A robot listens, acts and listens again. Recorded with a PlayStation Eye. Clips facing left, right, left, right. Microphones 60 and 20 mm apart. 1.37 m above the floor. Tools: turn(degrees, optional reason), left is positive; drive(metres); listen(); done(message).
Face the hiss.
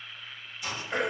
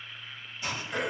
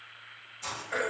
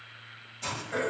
turn(degrees=-35, reason="The hiss: about 35° right or 145° right.")
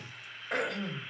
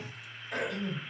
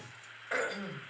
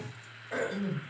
listen()
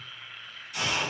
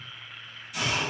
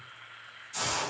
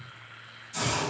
done("Found it: a hiss, straight ahead, 1 to 2 m away.")